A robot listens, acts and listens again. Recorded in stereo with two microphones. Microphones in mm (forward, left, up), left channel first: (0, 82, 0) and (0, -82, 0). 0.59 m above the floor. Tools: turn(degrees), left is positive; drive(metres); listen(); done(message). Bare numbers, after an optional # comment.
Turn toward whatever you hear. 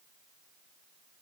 listen()
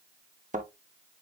# The thud: about 50° right or 130° right.
turn(-50)
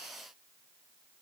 listen()
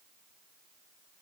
done("I heard a thud, but can't make it out now. It was about straight ahead or 80° right.")